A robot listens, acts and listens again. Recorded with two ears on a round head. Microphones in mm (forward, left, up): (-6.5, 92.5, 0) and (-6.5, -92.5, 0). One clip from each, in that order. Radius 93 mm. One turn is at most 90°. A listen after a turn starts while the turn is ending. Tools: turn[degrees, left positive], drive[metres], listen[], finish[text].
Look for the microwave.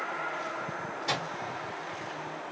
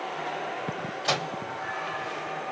Thought: The microwave: about 35° right or 145° right.
Action: turn[-35]
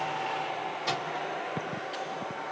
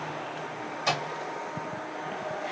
Thought: So it is at 110° right.
Action: turn[-90]
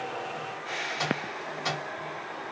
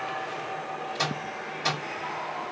Thought: The microwave is now 35° right.
Action: turn[-35]
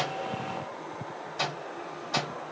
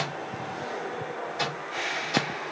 Thought: The microwave is now 15° left.
Action: turn[15]
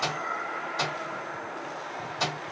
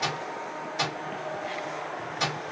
Action: finish[Found it: a microwave, straight ahead.]